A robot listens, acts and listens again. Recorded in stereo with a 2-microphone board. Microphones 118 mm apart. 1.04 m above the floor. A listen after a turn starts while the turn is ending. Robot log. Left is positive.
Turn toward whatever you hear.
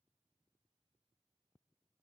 cmd idle
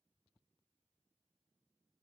cmd idle
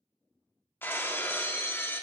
note: The breaking glass: about 20° left or 160° left.
cmd yaw +20
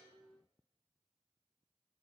cmd idle
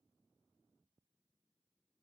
end: I heard breaking glass, but can't make it out now. It was about straight ahead or 140° left.